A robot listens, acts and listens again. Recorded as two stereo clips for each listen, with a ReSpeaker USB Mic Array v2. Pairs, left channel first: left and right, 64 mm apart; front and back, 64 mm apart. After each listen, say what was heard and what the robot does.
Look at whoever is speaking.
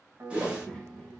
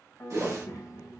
The child speaking: 15° left. Turn 15° left.
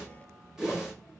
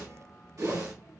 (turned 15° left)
Found it: a child speaking, straight ahead.